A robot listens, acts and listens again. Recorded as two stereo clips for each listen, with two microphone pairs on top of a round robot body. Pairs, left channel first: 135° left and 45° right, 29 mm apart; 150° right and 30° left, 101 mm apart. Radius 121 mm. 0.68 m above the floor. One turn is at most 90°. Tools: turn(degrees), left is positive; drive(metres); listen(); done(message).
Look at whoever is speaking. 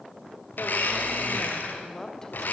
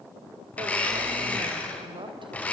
turn(degrees=65)
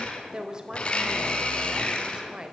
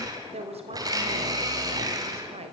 turn(degrees=15)
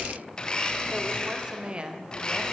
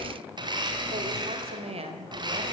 turn(degrees=10)
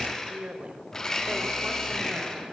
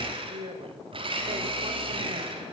done("Facing the woman speaking, 2 to 4 m away.")